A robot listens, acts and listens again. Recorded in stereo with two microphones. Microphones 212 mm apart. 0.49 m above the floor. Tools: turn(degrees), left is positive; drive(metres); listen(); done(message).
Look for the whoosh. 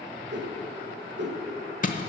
turn(degrees=-55)
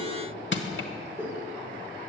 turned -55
turn(degrees=-10)
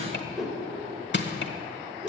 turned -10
done("Facing the whoosh, 1 to 2 m away.")